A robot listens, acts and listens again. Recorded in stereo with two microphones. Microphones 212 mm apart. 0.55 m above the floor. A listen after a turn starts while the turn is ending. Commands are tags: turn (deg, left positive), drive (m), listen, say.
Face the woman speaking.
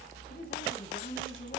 <turn deg="45"/>
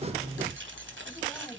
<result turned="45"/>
<listen/>
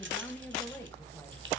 <turn deg="10"/>
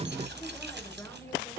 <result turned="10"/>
<turn deg="10"/>
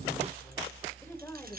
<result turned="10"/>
<turn deg="10"/>
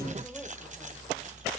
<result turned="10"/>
<listen/>
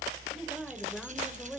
<say>Facing the woman speaking, 2 to 4 m away.</say>